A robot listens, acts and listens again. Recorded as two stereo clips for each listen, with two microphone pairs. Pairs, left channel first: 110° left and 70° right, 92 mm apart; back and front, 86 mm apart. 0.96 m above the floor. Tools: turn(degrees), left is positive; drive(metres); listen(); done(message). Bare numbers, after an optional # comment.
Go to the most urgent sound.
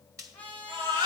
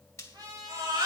# The baby crying: 35° right.
turn(-35)
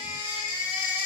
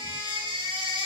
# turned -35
drive(1.0)
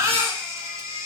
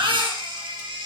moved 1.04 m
# The baby crying is now 10° right.
turn(-10)
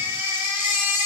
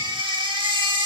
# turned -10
drive(1.0)
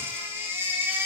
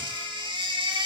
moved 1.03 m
drive(1.0)
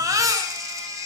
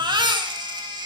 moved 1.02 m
# The baby crying is now 20° right.
turn(-20)
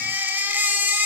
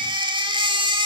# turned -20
drive(1.0)
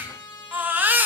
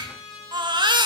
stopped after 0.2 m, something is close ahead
done("I am next to the baby crying.")